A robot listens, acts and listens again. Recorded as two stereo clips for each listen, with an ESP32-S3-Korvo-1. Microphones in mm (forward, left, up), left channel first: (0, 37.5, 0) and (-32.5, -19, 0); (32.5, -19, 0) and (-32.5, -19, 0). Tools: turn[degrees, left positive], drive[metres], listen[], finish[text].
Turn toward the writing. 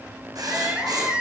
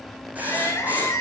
Thought: The writing: 115° right.
Action: turn[-115]
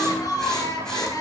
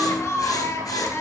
Action: listen[]
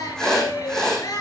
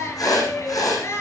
Thought: The writing is now 25° right.
Action: turn[-25]
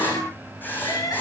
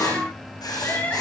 Action: finish[Facing the writing, over 4 m away.]